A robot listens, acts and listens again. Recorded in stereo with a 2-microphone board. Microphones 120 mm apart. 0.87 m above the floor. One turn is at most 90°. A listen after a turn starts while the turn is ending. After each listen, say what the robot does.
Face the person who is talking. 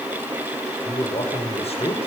Turn 60° left.
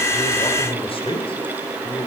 Turn 40° left.
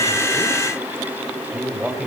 Found it: a man speaking, straight ahead, 2 to 4 m away.